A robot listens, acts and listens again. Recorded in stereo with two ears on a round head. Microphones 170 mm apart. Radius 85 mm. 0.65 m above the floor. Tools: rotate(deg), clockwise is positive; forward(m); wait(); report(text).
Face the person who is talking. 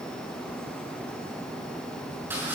wait()
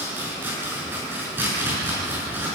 wait()
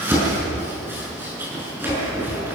report("I can't make out anyone speaking to turn to.")